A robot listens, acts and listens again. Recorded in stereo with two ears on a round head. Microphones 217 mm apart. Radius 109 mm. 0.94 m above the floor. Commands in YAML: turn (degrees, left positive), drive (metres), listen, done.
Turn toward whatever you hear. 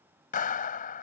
turn: 35
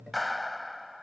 done: "Facing the clap."